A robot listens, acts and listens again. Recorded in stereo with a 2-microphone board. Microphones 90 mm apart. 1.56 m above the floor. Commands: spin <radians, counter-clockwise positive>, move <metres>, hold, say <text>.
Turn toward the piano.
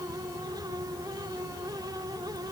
hold
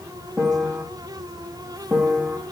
spin 0.52
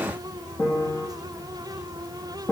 spin 2.53
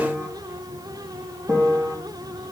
spin -0.52
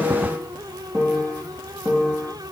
spin -0.35
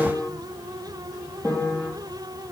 say Facing the piano.